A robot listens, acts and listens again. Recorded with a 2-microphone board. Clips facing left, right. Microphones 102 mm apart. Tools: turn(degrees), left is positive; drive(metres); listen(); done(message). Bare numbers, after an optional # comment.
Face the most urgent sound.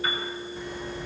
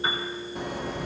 # The alarm: about 65° right or 115° right.
turn(-65)
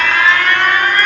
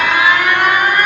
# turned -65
# So it is at 15° right.
turn(-15)
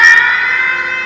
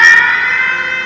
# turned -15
done("Facing the alarm.")